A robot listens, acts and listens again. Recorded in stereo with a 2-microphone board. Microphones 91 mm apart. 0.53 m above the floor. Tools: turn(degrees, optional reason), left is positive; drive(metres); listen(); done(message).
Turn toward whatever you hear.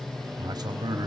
turn(degrees=-50, reason="The man speaking: about 50° right or 130° right.")
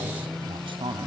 turn(degrees=-80, reason="So it is at 80° right.")
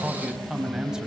turn(degrees=-10, reason="The man speaking is now 10° right.")
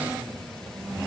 listen()
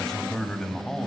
done("Found it: a man speaking, straight ahead, 2 to 4 m away.")